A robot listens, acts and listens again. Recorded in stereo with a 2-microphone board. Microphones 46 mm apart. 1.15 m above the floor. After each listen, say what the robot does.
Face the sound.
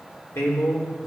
Turn 75° left.
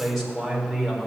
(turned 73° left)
Facing the man speaking, over 4 m away.